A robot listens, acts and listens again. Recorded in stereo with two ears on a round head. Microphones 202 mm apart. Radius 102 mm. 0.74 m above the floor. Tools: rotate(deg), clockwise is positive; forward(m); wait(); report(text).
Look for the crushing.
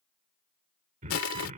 rotate(-70)
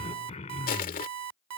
rotate(-40)
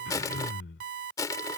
rotate(-15)
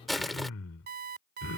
report("Found it: crushing, straight ahead.")